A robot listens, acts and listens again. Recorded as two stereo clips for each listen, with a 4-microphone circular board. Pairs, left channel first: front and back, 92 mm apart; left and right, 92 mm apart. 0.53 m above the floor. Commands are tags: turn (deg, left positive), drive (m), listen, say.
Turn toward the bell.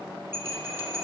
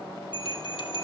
<turn deg="115"/>
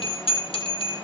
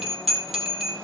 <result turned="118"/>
<say>Found it: a bell, straight ahead.</say>